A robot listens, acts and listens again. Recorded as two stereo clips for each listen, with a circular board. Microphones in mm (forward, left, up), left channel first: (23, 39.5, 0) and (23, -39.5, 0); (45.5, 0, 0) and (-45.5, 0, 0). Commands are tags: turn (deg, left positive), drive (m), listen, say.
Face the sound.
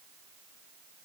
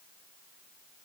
<listen/>
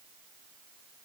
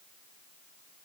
<listen/>
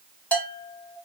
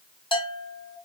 <turn deg="20"/>
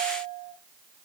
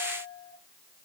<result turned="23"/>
<say>Found it: a bell, straight ahead.</say>